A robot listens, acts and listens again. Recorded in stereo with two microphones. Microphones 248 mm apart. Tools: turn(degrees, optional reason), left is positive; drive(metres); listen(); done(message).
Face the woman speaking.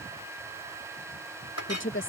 turn(degrees=50, reason="The woman speaking: about 50° left or 130° left.")
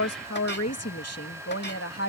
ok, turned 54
turn(degrees=65, reason="So it is at 65° left.")
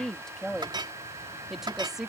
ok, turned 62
done("Found it: a woman speaking, straight ahead.")